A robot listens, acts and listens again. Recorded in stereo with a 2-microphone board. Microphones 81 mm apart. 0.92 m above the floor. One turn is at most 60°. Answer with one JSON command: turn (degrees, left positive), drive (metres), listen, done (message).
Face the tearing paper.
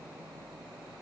{"listen": true}
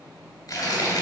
{"turn": 55}
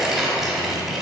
{"done": "Facing the tearing paper, 1 to 2 m away."}